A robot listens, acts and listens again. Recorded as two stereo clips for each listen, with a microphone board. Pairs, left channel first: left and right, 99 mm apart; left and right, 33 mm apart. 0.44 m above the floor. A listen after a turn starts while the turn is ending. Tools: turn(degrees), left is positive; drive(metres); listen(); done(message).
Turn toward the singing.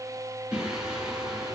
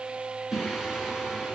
turn(degrees=-30)
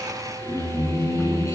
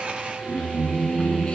turn(degrees=30)
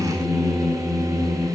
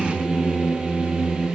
done("Facing the singing.")